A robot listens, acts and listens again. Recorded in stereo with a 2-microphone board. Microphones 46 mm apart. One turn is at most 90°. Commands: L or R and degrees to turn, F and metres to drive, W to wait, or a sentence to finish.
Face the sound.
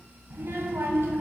R75
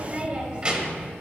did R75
R15
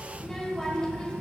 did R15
L25
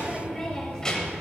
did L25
L25
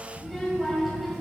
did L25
Facing the child speaking, 1 to 2 m away.